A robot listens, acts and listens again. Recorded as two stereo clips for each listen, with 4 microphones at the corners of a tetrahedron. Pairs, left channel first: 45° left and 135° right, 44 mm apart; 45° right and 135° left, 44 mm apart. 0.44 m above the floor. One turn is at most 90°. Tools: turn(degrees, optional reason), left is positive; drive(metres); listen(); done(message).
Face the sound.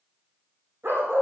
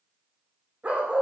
turn(degrees=-90, reason="The dog barking: 165° right.")
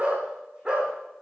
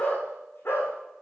turn(degrees=-65, reason="The dog barking is now 65° right.")
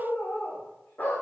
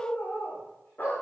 done("Facing the dog barking, over 4 m away.")